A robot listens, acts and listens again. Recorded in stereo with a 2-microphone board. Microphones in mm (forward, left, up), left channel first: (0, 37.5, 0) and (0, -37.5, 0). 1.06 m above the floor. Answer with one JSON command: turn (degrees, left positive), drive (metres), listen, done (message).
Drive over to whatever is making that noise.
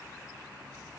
{"listen": true}
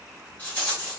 {"turn": 25}
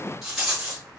{"drive": 1.0}
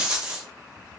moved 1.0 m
{"turn": -15}
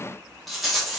{"drive": 1.0}
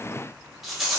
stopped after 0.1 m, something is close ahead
{"done": "Arrived at the rattle, straight ahead."}